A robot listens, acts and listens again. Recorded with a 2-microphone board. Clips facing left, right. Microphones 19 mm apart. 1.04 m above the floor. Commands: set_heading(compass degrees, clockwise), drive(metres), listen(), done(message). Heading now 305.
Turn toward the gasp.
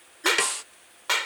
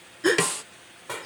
set_heading(335)
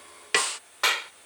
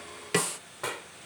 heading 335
listen()
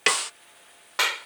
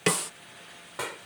done("I heard a gasp, but can't make it out now. It was about straight ahead or 120° right.")